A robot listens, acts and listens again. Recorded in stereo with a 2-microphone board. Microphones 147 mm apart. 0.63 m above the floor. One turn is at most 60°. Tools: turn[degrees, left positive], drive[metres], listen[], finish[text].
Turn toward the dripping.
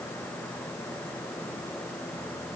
Action: listen[]
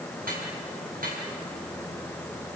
Action: turn[-60]
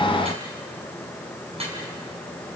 Thought: So it is at 45° right.
Action: turn[-45]
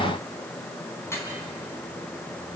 Thought: The dripping is now 20° left.
Action: turn[20]
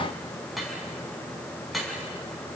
Action: finish[Facing the dripping.]